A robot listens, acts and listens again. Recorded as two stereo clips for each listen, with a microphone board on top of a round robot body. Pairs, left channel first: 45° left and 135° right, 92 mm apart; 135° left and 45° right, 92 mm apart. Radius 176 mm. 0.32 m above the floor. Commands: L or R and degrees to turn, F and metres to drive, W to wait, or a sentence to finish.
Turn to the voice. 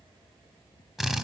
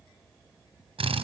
W
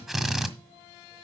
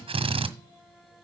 W
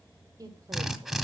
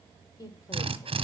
L175
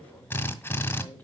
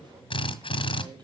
R25
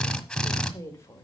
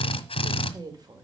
R10
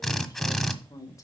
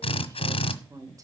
Found it: a woman speaking, straight ahead.